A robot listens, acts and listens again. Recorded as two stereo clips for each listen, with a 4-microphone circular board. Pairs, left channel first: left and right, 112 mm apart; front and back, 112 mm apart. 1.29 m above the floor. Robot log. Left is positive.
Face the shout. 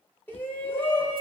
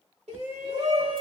note: The shout: 160° left.
cmd yaw +160
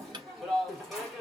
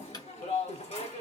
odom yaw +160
end: Facing the shout, 1 to 2 m away.